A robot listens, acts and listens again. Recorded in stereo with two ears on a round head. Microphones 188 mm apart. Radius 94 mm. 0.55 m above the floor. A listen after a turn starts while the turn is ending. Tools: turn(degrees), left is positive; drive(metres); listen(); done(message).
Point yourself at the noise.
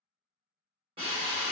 turn(degrees=-25)
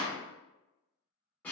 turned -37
turn(degrees=10)
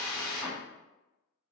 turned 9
done("Found it: a drill, straight ahead, 1 to 2 m away.")